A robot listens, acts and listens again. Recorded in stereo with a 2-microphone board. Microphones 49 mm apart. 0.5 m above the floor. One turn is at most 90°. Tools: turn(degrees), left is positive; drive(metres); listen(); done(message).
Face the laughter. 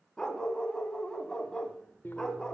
listen()
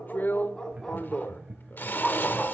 turn(degrees=-20)
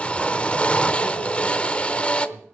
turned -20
listen()
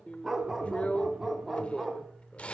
listen()
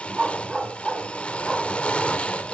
done("I heard laughter, but can't make it out now. It was about straight ahead or 140° right.")